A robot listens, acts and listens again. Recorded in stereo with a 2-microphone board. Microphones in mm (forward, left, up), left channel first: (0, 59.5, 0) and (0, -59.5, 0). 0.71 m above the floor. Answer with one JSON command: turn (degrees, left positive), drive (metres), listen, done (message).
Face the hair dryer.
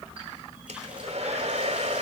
{"turn": -65}
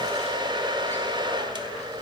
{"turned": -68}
{"turn": -45}
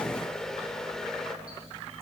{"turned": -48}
{"done": "Facing the hair dryer."}